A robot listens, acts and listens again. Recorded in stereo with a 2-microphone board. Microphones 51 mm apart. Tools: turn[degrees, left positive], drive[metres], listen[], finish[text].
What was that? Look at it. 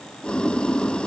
Thought: The boiling: about 20° left or 160° left.
Action: turn[20]
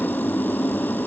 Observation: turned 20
Thought: So it is at 140° left.
Action: turn[140]
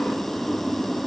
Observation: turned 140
Action: finish[Found it: boiling, straight ahead.]